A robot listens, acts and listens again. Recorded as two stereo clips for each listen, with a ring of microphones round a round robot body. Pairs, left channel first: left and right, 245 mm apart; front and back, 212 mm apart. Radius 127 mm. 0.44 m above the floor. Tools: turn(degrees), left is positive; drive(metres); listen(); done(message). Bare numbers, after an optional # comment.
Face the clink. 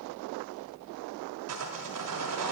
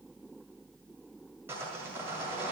listen()
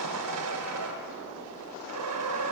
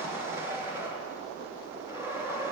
listen()
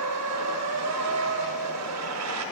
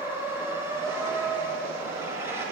done("I can't make out a clink to turn to.")